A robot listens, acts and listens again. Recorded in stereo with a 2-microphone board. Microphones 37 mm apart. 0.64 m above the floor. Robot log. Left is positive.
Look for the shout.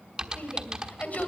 note: The shout: about 45° left or 135° left.
cmd yaw +45
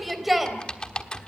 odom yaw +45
end: Facing the shout, 2 to 4 m away.